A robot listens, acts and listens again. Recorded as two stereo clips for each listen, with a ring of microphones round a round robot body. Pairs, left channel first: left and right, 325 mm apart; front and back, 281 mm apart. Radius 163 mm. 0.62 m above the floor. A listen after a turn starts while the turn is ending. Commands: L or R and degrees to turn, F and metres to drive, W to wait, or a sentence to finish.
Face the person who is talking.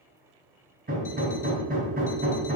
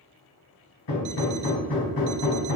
W
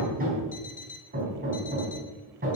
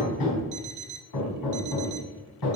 W
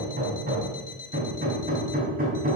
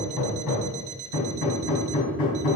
I can't make out anyone speaking, only hammering and an alarm clock.